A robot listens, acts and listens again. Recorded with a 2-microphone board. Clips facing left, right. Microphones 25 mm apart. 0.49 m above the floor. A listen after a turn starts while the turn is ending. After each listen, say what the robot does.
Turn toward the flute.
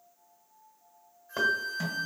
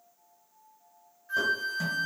Turn 60° right.
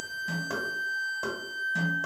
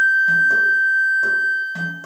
Turn 50° right.
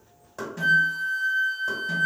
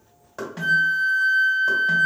Turn 10° right.
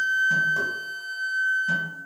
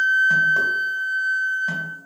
Found it: a flute, straight ahead, 1 to 2 m away.